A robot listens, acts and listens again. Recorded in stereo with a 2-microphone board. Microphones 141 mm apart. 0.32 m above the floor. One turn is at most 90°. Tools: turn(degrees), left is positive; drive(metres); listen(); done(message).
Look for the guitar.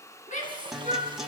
turn(degrees=-30)
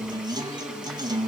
turn(degrees=-90)
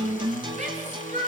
turn(degrees=-40)
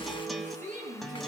done("Found it: a guitar, straight ahead.")